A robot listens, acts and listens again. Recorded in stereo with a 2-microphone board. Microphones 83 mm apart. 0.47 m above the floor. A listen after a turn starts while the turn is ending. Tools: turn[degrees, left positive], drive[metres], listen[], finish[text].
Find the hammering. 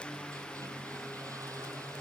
Action: listen[]
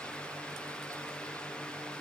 Action: listen[]
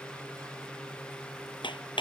Action: turn[90]
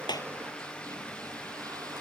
Action: listen[]
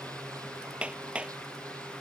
Thought: The hammering is now 15° right.
Action: turn[-15]
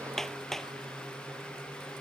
Action: finish[Facing the hammering.]